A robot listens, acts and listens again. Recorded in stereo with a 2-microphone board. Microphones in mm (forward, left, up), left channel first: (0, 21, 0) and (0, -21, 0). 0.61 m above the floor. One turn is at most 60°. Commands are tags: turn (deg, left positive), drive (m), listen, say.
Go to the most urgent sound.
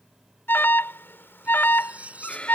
<turn deg="60"/>
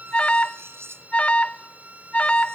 <turn deg="35"/>
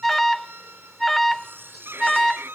<drive m="1.0"/>
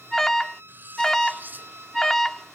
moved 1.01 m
<turn deg="15"/>
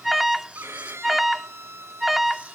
<drive m="1.0"/>
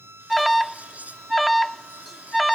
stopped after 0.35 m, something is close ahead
<say>I am next to the alarm.</say>